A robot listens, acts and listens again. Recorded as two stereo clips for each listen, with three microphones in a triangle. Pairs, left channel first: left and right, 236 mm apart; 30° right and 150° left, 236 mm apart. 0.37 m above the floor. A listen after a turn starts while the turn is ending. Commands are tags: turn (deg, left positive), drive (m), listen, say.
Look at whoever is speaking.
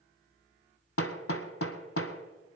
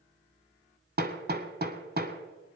<listen/>
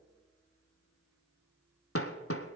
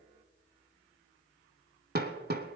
<listen/>
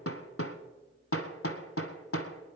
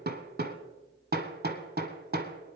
<say>I can't make out anyone speaking, only hammering.</say>